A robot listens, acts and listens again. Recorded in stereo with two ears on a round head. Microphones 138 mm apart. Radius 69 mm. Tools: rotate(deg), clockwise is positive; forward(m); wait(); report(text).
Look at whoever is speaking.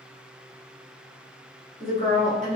rotate(55)
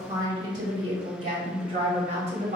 rotate(50)
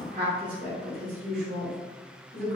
rotate(50)
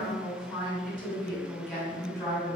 rotate(-15)
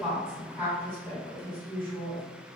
report("Found it: a woman speaking, straight ahead, 1 to 2 m away.")